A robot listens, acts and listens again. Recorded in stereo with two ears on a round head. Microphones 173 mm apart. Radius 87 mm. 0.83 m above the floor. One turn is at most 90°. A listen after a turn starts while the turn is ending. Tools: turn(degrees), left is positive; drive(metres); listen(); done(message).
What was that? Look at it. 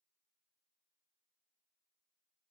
listen()
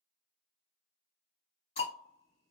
turn(degrees=35)
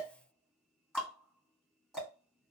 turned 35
done("Found it: ticking, straight ahead, 1 to 2 m away.")